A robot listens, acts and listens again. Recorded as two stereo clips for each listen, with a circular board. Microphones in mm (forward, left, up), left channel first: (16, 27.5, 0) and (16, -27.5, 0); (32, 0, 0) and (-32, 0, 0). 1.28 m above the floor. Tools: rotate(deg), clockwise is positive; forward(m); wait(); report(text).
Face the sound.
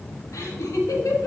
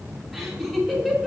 rotate(-85)
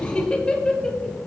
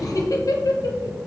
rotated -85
rotate(-10)
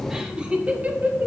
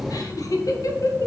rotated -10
rotate(35)
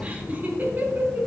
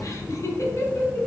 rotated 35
rotate(45)
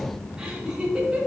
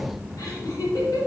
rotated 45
rotate(20)
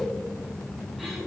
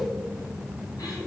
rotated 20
wait()
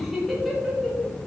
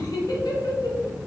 report("Facing the laughter.")